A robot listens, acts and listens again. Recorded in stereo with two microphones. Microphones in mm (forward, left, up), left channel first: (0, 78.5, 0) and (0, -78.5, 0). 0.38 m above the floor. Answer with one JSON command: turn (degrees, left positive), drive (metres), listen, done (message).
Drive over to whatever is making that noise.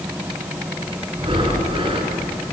{"turn": -35}
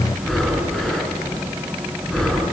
{"drive": 1.0}
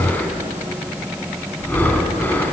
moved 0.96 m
{"turn": 10}
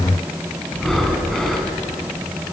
{"drive": 1.0}
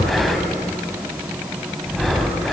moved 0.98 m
{"drive": 1.0}
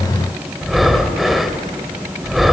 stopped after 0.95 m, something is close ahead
{"done": "Arrived at the breathing, straight ahead."}